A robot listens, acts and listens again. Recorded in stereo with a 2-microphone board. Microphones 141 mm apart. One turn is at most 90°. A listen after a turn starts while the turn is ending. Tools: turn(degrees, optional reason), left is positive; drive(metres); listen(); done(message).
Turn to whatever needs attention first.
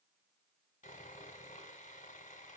listen()
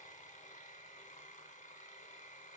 listen()
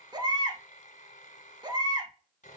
turn(degrees=-30, reason="The baby crying: about 30° right or 150° right.")
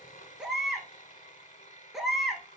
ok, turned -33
done("Found it: a baby crying, straight ahead, 1 to 2 m away.")